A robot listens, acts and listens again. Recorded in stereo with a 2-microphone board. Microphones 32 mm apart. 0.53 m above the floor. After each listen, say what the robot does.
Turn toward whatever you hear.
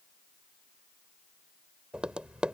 Turn 30° right.
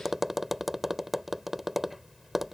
Turn 10° right.
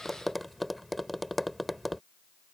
Found it: tapping, straight ahead.